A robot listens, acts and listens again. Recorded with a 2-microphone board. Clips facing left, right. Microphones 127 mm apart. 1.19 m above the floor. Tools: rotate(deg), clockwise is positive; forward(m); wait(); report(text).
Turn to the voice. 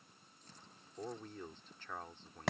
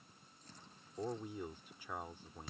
rotate(30)
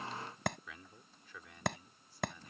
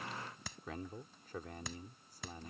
rotate(135)
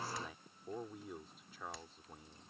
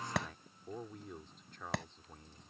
report("Facing the man speaking.")